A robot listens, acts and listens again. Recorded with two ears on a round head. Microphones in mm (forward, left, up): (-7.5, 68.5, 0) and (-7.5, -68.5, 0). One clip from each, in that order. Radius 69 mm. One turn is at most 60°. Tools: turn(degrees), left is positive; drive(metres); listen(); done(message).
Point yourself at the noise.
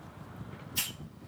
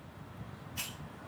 turn(degrees=60)
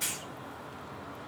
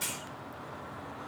done("Facing the hiss.")